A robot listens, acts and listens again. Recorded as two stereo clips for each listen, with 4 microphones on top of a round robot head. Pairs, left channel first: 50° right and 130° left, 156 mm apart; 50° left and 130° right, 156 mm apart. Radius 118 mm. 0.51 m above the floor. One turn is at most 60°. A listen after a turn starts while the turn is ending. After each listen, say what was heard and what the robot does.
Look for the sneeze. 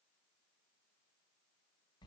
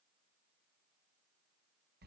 Keep listening.
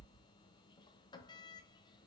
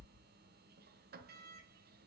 Keep listening.
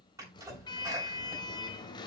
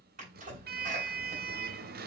The sneeze: 160° right. Turn 60° right.
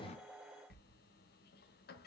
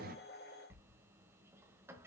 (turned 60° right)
Nothing new. It was at 100° right. Turn 60° right.
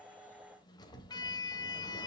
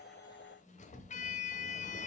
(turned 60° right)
Nothing new. It was at 40° right. Turn 40° right.
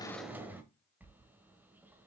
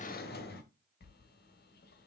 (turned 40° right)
I heard a sneeze from this way, but can't make it out now.